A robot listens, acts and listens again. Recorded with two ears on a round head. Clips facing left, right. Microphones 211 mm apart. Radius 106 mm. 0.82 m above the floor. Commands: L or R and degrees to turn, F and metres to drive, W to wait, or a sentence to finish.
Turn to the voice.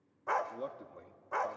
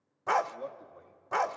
L30
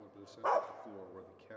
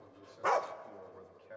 L115
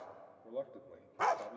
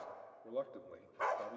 R10
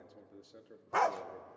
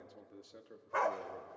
Found it: a man speaking, straight ahead, 1 to 2 m away.